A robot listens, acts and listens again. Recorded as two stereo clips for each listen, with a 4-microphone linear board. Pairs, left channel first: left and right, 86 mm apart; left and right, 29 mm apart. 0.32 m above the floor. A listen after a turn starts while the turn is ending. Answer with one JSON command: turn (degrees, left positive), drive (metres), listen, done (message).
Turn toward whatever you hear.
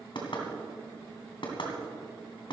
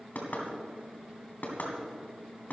{"turn": 65}
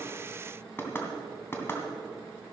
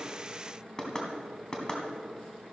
{"turn": 30}
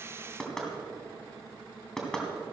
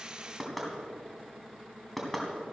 {"done": "Facing the knocking, 2 to 4 m away."}